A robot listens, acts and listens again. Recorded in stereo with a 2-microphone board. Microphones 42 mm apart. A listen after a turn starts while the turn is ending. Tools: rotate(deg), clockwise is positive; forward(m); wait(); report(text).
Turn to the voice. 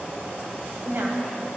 rotate(55)
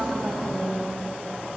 rotate(15)
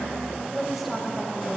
report("Found it: a woman speaking, straight ahead, 1 to 2 m away.")